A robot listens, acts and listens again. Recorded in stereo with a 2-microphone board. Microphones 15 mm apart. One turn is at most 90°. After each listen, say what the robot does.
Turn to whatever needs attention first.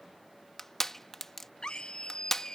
Turn 60° left.
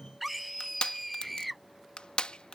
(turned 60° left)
Facing the scream.